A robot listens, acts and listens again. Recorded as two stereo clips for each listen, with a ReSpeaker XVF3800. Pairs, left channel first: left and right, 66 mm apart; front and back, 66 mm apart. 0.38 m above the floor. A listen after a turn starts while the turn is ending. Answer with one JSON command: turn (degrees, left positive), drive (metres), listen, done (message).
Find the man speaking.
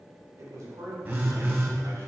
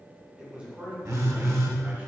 {"turn": -120}
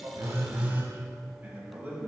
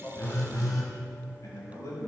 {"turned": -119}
{"turn": -40}
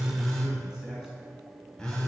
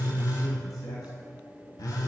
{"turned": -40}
{"listen": true}
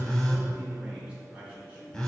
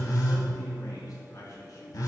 {"turn": -20}
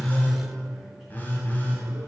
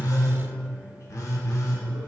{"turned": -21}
{"listen": true}
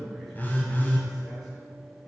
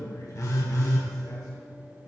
{"done": "Facing the man speaking."}